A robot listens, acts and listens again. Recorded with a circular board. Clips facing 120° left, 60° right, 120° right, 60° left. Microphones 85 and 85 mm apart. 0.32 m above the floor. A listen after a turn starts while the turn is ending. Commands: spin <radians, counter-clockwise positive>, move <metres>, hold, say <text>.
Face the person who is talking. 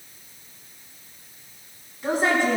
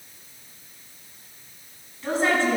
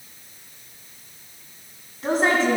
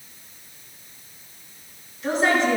spin -2.88
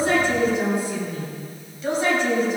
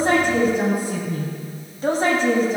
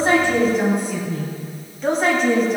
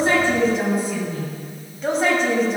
spin -0.52
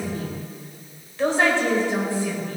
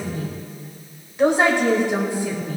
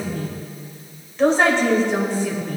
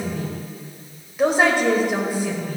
spin -0.17
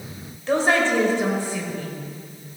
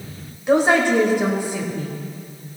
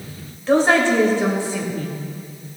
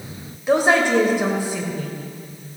say Facing the woman speaking, 1 to 2 m away.